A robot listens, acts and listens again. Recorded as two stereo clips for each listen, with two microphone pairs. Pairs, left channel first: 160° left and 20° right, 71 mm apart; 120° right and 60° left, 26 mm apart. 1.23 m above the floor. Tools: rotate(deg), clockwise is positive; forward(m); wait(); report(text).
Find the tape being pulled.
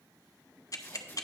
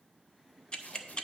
rotate(135)
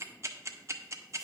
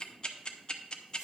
wait()
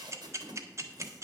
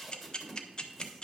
rotate(25)
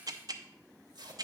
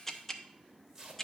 report("Found it: tape being pulled, straight ahead.")